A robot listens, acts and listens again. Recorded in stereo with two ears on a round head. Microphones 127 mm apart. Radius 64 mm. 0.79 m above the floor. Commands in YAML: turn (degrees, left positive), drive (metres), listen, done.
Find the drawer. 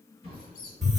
turn: 40
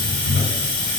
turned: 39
listen: true
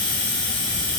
listen: true
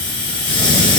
done: "I heard a drawer, but can't make it out now. It was about straight ahead or 105° left."